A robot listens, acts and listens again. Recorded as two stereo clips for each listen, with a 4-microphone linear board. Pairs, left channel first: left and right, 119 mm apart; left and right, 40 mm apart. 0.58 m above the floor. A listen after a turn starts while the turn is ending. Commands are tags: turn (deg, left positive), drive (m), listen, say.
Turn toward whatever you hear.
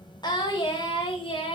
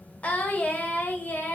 <turn deg="45"/>
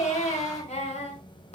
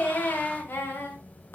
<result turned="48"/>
<turn deg="65"/>
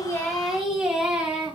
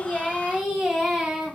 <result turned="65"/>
<say>Found it: singing, straight ahead, 2 to 4 m away.</say>